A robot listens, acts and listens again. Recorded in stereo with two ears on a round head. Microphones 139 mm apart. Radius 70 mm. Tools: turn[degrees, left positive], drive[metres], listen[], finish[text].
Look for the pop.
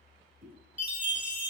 Thought: The pop: about 45° right or 135° right.
Action: turn[-45]
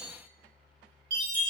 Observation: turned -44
Action: listen[]
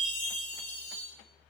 Action: finish[I heard a pop, but can't make it out now. It was about straight ahead or 90° right.]